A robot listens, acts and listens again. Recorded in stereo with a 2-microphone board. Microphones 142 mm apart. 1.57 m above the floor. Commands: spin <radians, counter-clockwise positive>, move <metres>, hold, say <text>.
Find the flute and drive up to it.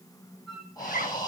spin 0.52
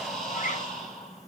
hold
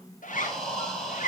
hold
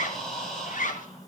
say I heard a flute, but can't make it out now. It was about 30° right or 150° left. I did not reach it.